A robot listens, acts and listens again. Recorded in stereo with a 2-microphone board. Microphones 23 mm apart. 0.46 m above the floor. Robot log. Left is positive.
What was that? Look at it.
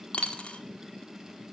note: The dropped coin: about 60° left or 120° left.
cmd yaw +60
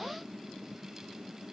cmd idle
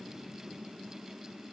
end: I heard a dropped coin, but can't make it out now. It was about straight ahead or 60° left.